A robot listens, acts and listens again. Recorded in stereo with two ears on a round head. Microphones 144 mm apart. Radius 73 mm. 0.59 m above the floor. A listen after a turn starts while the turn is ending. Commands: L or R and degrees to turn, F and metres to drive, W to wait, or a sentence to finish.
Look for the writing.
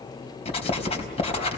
L40
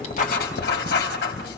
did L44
L90
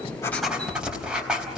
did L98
Facing the writing, over 4 m away.